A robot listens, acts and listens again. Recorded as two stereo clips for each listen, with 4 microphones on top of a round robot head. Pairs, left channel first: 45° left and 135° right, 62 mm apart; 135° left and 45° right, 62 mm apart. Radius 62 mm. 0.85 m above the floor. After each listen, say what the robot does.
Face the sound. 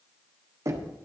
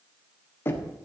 Turn 170° right.
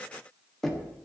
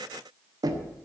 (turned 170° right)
Turn 40° right.
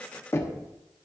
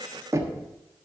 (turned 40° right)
Facing the knocking.